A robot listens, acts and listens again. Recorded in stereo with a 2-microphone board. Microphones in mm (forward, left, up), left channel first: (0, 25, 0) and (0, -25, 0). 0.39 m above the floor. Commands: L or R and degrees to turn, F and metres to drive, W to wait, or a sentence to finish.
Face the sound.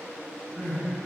L25
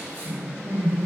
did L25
L130
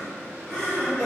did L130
Found it: crying, straight ahead.